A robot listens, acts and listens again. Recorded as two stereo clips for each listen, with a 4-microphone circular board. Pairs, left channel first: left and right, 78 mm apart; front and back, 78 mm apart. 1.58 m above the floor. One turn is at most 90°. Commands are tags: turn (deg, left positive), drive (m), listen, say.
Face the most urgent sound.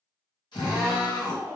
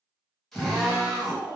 <turn deg="15"/>
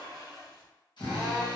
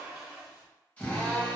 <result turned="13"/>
<listen/>
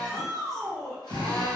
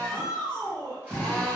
<say>Found it: a shout, straight ahead.</say>